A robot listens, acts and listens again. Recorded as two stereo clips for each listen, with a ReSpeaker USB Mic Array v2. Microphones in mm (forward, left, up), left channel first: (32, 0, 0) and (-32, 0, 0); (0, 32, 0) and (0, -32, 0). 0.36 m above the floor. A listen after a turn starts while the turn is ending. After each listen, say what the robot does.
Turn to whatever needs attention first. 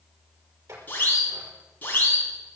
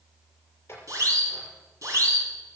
Turn 60° right.
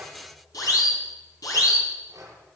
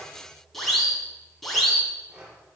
Found it: a siren, straight ahead.